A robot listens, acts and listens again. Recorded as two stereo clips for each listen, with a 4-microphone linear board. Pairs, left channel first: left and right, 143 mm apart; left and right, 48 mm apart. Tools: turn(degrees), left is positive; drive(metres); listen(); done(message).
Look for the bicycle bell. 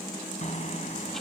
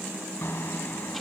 turn(degrees=55)
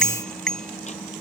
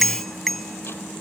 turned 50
done("Found it: a bicycle bell, straight ahead.")